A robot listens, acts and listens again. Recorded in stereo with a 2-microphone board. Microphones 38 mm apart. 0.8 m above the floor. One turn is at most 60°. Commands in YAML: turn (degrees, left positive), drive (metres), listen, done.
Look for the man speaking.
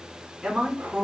turn: -20
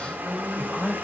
turn: -30
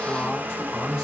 turn: 10
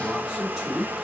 turn: -10
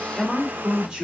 turn: -15
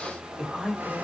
done: "Facing the man speaking."